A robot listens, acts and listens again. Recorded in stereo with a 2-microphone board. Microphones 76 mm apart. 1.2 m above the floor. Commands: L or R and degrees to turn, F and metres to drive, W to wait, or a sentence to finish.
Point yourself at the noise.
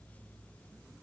W
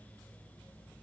W
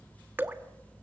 R25
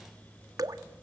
R130
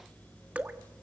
R20
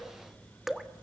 Found it: dripping, straight ahead.